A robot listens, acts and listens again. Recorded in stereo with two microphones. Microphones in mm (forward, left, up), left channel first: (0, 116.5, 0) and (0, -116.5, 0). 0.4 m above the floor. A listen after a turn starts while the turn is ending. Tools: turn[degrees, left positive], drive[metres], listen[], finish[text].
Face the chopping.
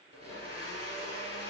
Action: listen[]
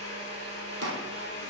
Action: turn[-90]
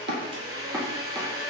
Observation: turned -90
Action: listen[]
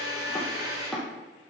Action: finish[Facing the chopping, 1 to 2 m away.]